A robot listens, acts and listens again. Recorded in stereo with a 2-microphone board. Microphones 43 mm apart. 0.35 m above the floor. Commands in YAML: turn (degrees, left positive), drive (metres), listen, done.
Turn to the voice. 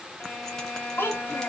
turn: 65
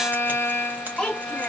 turn: 20
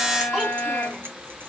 listen: true
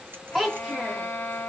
done: "Facing the child speaking, 1 to 2 m away."